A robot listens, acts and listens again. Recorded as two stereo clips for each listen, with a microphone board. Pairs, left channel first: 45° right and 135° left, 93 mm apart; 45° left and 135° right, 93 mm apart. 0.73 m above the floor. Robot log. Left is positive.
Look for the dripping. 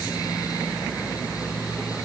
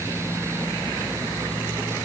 cmd idle
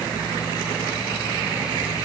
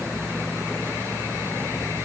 cmd idle
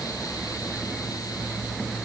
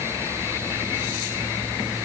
end: I can't make out dripping to turn to.